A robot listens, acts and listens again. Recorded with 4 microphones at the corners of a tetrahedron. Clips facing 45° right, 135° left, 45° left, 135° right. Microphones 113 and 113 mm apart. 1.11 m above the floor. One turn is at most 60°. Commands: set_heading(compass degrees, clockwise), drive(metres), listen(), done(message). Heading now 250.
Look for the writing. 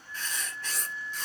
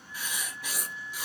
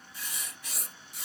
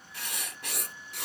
set_heading(310)
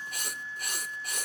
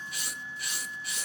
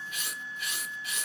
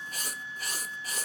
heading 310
set_heading(10)
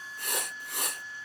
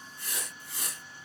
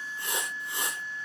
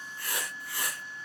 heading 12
set_heading(32)
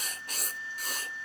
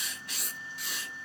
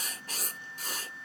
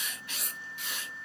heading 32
done("Facing the writing.")